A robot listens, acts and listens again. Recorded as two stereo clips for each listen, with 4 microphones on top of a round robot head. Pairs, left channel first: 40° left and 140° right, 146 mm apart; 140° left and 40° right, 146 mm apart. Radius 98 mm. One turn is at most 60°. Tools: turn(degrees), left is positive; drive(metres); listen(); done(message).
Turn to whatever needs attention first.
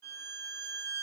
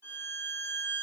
listen()
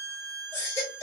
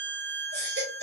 turn(degrees=-30)
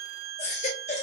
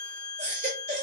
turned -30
done("Facing the baby crying, 2 to 4 m away.")